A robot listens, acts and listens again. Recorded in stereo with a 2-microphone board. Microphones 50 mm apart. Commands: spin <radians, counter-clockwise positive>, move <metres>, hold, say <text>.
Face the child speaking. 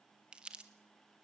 hold
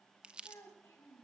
spin 1.22
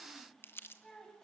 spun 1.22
spin 0.26
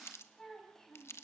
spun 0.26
spin 0.17
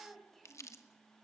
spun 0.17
say Found it: a child speaking, straight ahead, over 4 m away.